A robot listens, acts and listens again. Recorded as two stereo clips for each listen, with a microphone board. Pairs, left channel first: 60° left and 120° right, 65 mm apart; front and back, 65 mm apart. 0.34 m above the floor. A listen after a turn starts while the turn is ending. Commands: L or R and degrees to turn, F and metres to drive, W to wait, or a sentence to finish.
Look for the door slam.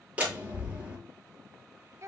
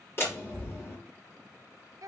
R50
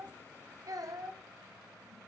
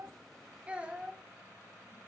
I heard a door slam from this way, but can't make it out now.